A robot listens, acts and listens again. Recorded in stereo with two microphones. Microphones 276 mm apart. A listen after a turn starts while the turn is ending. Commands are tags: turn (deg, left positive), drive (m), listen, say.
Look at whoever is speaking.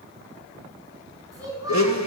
<turn deg="-30"/>
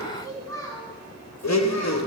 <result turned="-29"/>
<turn deg="10"/>
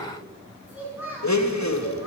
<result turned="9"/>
<say>Facing the child speaking.</say>